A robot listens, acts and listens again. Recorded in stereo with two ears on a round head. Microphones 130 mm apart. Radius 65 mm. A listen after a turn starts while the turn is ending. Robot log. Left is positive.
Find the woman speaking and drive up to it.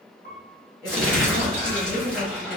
note: The woman speaking: about 65° left or 115° left.
cmd yaw +65
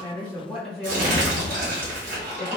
cmd fwd 1.0
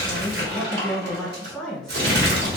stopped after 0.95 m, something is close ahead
end: Arrived at the woman speaking, straight ahead.